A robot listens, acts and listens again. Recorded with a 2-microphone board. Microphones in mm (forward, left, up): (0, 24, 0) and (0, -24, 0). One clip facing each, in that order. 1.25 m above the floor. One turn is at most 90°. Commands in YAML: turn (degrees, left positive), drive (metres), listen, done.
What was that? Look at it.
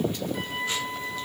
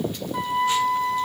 turn: -70
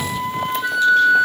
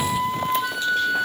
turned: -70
done: "Facing the flute."